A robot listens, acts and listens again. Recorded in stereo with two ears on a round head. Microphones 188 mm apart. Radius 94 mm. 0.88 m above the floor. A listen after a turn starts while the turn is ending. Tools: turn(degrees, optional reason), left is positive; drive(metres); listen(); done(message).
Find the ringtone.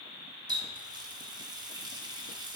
listen()
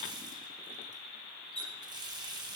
listen()
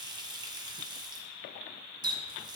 done("I can't make out a ringtone to turn to.")